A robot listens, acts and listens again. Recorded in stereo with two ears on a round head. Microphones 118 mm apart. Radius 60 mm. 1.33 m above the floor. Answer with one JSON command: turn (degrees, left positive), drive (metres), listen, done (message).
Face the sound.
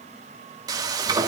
{"turn": -30}
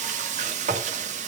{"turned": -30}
{"turn": -120}
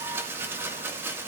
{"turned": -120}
{"turn": -15}
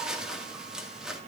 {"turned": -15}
{"done": "Facing the frying, 2 to 4 m away."}